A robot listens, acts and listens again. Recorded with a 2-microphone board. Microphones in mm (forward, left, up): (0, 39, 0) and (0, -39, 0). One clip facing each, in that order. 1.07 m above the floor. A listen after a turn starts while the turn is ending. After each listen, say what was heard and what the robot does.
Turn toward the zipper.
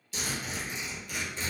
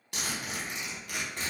The zipper: about 65° right or 115° right. Turn 65° right.
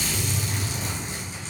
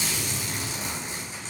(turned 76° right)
So it is at 40° right. Turn 40° right.
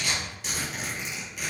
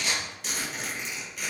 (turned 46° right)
Facing the zipper.